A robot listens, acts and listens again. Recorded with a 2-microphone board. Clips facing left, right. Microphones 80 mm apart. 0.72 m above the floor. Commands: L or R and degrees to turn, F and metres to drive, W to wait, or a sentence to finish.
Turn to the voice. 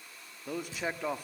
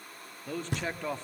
L30
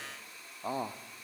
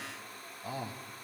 L140
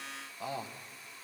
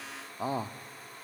R40
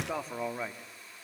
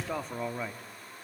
Found it: a man speaking, straight ahead, 1 to 2 m away.